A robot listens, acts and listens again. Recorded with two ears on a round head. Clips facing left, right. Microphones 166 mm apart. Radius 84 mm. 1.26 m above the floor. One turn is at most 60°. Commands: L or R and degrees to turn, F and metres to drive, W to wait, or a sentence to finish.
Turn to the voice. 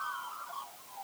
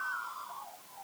W
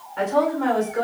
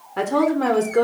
R60
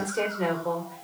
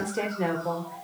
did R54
R10
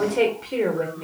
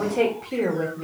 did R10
Facing the woman speaking, 1 to 2 m away.